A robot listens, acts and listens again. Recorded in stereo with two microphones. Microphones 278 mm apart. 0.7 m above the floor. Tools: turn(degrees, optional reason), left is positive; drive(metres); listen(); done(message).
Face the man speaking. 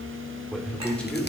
turn(degrees=30)
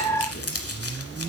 listen()
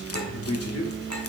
turn(degrees=115, reason="So it is at 115° left.")
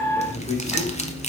turn(degrees=20, reason="The man speaking is now 20° left.")
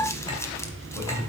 done("Facing the man speaking.")